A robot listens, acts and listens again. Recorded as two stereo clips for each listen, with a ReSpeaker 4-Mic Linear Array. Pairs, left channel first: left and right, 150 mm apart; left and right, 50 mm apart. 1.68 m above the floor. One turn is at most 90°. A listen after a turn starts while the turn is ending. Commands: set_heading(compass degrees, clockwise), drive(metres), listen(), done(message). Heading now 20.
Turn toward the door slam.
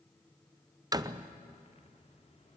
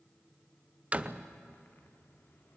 set_heading(45)
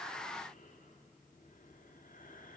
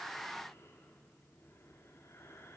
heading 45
listen()
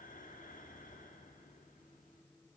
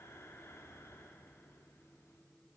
done("I heard a door slam, but can't make it out now. It was about straight ahead or 130° right.")